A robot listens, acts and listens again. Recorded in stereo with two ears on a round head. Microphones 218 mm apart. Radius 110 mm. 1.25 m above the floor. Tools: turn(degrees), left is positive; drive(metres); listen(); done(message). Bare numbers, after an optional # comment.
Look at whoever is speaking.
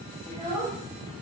# The child speaking: about 25° right or 155° right.
turn(-25)
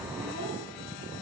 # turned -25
listen()
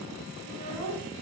# So it is at 115° right.
turn(-115)
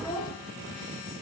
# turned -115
# The child speaking is now 20° left.
turn(20)
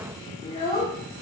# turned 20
# The child speaking is now 25° left.
turn(25)
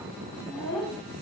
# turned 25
# The child speaking is now 10° left.
turn(10)
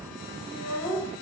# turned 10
done("Found it: a child speaking, straight ahead.")